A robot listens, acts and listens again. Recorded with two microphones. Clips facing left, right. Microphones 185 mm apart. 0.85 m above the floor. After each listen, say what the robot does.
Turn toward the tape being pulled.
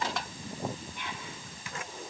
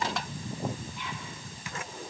Keep listening.
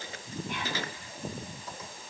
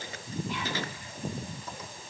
Keep listening.
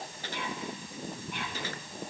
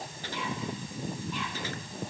I can't make out tape being pulled to turn to.